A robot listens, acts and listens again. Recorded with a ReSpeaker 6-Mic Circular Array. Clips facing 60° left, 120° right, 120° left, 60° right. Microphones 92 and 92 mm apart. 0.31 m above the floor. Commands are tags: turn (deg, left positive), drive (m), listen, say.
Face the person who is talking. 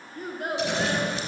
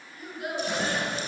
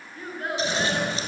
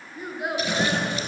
<turn deg="20"/>
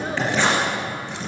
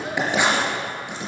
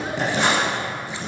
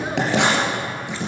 <listen/>
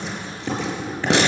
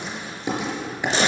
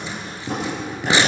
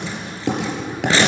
<listen/>
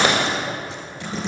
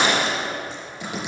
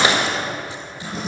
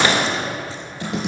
<say>Facing where the child speaking came from. I can't hear it now.</say>